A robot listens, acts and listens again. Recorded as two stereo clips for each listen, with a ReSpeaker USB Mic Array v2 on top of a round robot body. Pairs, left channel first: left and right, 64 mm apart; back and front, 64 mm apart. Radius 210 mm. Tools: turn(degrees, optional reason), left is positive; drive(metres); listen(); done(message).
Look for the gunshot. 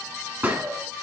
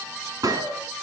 turn(degrees=-25, reason="The gunshot: 25° right.")
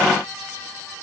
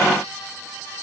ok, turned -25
done("Facing where the gunshot came from. I can't hear it now.")